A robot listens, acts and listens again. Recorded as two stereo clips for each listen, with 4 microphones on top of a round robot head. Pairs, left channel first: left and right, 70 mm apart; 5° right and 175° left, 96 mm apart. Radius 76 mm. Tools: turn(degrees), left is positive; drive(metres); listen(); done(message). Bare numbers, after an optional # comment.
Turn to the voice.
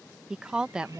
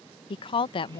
# The woman speaking: 15° right.
turn(-15)
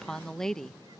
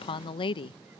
done("Facing the woman speaking.")